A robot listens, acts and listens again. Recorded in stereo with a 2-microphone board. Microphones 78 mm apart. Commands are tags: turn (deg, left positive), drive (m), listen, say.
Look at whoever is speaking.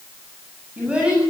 <turn deg="-30"/>
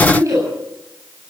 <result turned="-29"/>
<turn deg="-140"/>
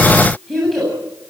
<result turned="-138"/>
<say>Found it: a child speaking, straight ahead, over 4 m away.</say>